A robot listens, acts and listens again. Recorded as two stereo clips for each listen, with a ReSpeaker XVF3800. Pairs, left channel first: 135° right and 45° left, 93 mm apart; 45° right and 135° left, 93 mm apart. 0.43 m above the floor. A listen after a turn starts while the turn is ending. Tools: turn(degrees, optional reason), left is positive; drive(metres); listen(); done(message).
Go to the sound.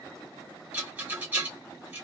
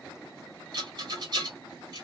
turn(degrees=110, reason="The rattle: 110° left.")
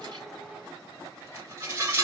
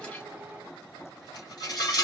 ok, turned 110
turn(degrees=-15, reason="The rattle is now 15° right.")
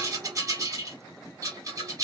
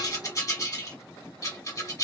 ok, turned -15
drive(metres=1.0)
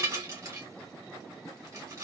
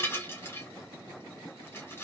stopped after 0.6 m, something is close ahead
done("Arrived at the rattle, straight ahead.")